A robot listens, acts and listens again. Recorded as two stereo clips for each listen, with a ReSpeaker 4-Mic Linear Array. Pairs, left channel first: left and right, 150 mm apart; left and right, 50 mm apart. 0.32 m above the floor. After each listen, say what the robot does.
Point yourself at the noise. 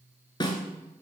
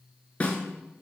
Turn 30° left.
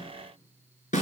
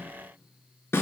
Turn 120° left.
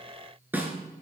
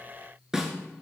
Turn 10° right.
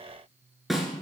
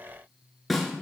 Facing the snare drum, 1 to 2 m away.